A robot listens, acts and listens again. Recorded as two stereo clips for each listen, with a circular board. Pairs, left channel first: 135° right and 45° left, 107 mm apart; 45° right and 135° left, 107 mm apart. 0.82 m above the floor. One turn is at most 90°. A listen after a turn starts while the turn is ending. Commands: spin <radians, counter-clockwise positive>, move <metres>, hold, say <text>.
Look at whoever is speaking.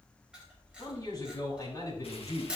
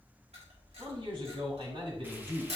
spin 1.57
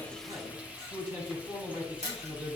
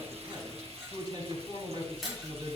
spin 1.48
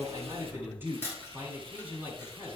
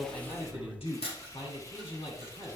spin -0.44
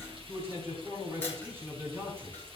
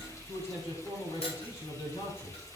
spin -0.35
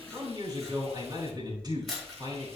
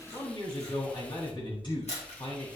say Found it: a man speaking, straight ahead, over 4 m away.